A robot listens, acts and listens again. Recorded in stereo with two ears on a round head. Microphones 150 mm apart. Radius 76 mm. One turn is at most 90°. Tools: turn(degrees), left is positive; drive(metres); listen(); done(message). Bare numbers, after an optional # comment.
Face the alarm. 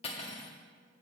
listen()
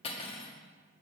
listen()
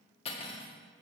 done("I can't make out an alarm, only cutlery clinking.")